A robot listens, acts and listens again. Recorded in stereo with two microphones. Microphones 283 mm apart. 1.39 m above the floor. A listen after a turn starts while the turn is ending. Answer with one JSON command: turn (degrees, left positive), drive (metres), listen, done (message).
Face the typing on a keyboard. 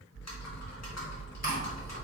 {"turn": 65}
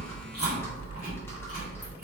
{"turn": 10}
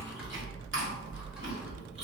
{"done": "Found it: typing on a keyboard, straight ahead."}